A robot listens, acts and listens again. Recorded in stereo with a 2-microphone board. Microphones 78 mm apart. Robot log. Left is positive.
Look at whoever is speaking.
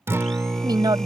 note: The woman speaking: about 70° right or 110° right.
cmd yaw -70
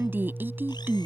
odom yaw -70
note: So it is at 30° right.
cmd yaw -30
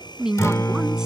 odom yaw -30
note: The woman speaking is now 10° right.
cmd yaw -10
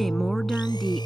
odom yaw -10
cmd idle
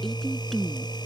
end: Facing the woman speaking.